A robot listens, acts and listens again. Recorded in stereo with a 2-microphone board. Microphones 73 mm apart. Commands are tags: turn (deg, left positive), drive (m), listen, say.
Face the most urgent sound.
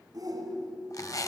<turn deg="-60"/>
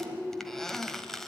<turn deg="-25"/>
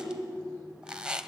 <say>Found it: a shout, straight ahead.</say>